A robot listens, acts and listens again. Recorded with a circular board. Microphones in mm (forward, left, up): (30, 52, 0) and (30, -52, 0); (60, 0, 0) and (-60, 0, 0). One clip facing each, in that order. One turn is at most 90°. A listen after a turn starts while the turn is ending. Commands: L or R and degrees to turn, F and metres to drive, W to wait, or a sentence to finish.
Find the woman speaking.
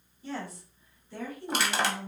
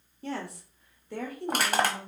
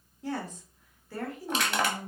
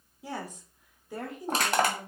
R90
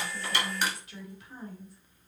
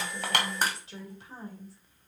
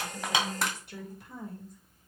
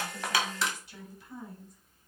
R35
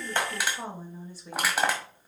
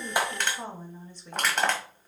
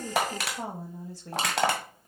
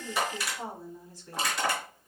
L10
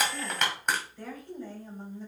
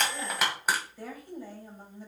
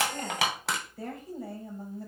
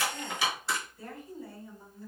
R10
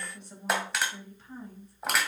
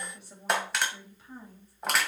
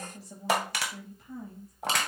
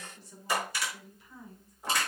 Facing the woman speaking.